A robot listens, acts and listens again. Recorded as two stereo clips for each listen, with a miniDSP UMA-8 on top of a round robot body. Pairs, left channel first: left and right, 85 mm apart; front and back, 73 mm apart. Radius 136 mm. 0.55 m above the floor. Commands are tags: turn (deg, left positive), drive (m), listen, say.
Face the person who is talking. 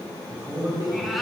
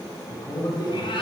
<turn deg="-35"/>
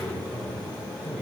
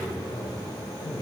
<turn deg="-15"/>
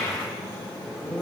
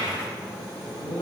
<say>Facing the man speaking.</say>